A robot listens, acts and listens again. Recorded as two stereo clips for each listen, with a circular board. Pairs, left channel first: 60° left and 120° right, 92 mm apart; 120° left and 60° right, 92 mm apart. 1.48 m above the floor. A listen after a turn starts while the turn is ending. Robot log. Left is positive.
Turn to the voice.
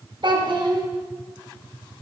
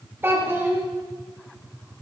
note: The child speaking: 120° right.
cmd yaw -120
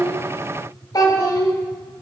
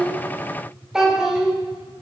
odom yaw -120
note: The child speaking is now 25° left.
cmd yaw +25
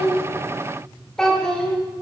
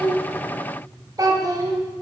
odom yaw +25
note: The child speaking is now 20° right.
cmd yaw -20
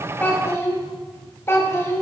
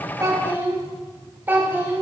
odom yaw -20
end: Facing the child speaking.